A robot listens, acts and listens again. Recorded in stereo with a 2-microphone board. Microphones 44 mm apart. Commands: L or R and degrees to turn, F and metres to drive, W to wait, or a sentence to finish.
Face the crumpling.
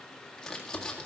L30
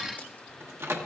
W
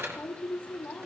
L145
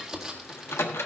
Found it: crumpling, straight ahead, 1 to 2 m away.